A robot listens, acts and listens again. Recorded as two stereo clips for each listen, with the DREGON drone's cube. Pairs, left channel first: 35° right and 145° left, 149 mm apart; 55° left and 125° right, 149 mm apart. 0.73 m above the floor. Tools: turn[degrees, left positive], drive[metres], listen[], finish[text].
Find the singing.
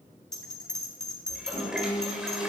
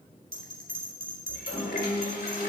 Thought: The singing: 10° right.
Action: turn[-10]
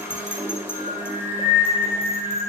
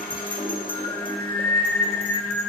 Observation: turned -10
Thought: The singing is now 30° right.
Action: turn[-30]
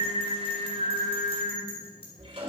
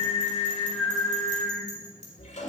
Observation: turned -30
Thought: The singing is now 25° right.
Action: turn[-25]
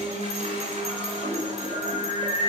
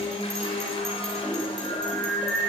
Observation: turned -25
Thought: The singing is now 15° right.
Action: turn[-15]
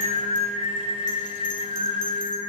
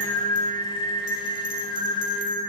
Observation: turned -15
Action: finish[Found it: singing, straight ahead, 2 to 4 m away.]